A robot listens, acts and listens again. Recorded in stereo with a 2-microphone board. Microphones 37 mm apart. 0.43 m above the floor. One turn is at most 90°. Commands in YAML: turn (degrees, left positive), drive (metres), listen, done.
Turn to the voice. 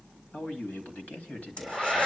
turn: 50
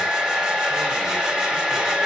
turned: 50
listen: true
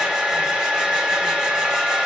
listen: true
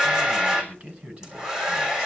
turn: -25
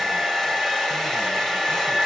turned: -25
listen: true
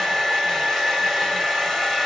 listen: true
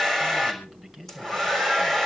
done: "Found it: a man speaking, straight ahead."